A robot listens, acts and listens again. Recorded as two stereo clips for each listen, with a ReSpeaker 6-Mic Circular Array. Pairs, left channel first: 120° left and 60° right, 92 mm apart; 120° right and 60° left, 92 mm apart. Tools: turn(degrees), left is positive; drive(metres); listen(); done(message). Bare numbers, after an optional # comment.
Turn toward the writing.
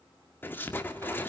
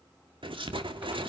# The writing: 55° left.
turn(55)
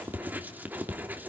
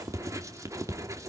# The writing is now 10° left.
turn(10)
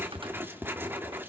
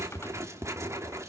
done("Facing the writing, 2 to 4 m away.")